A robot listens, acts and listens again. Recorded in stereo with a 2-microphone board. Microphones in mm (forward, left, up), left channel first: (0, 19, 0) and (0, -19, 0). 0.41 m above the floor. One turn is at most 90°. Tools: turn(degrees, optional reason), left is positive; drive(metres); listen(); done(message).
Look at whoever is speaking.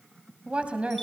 turn(degrees=-35, reason="The woman speaking: about 35° right or 145° right.")
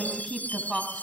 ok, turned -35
done("Found it: a woman speaking, straight ahead.")